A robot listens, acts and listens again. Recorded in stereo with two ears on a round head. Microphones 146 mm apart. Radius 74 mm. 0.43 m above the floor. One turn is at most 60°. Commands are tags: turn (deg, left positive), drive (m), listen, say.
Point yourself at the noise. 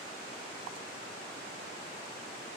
<listen/>
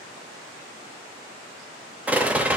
<turn deg="-30"/>
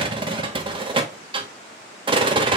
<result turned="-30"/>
<turn deg="-60"/>
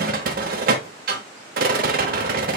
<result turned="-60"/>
<turn deg="-60"/>
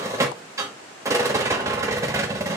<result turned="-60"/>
<turn deg="-20"/>
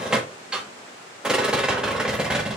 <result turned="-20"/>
<say>Facing the rattle.</say>